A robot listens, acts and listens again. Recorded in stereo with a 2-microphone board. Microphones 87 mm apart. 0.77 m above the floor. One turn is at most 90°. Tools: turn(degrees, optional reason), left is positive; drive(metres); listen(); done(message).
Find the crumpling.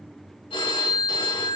listen()
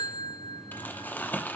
turn(degrees=20, reason="The crumpling: about 20° left or 160° left.")
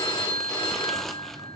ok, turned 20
done("Found it: crumpling, straight ahead.")